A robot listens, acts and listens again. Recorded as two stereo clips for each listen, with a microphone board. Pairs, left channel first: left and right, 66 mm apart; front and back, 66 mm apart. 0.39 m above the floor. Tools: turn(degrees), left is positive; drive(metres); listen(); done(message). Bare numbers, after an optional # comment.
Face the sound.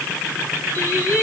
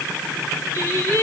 # The singing: 40° left.
turn(40)
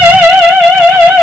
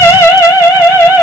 # The singing is now 15° right.
turn(-15)
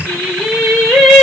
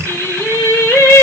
done("Facing the singing, 1 to 2 m away.")